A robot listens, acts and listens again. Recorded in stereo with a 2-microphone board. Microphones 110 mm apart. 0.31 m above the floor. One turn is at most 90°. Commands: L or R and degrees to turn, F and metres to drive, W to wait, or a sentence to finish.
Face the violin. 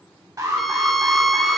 L30
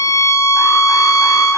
L90
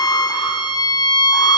L45
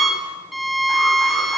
Found it: a violin, straight ahead.